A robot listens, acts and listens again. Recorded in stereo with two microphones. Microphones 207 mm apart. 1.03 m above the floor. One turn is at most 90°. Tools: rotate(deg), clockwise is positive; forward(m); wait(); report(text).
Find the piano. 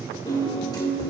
rotate(-20)
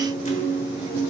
rotate(-90)
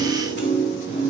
rotate(-60)
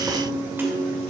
rotate(10)
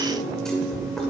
report("Facing the piano.")